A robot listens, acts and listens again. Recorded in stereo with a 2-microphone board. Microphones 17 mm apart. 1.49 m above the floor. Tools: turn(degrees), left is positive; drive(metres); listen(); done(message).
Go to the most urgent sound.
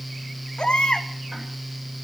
turn(degrees=65)
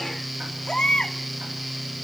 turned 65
turn(degrees=45)
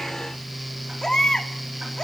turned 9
turn(degrees=35)
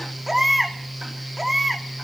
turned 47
turn(degrees=-10)
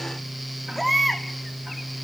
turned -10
drive(metres=1.0)
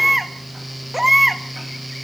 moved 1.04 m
turn(degrees=-10)
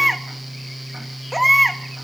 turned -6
drive(metres=1.0)
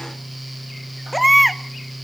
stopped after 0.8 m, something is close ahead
done("I am next to the baby crying.")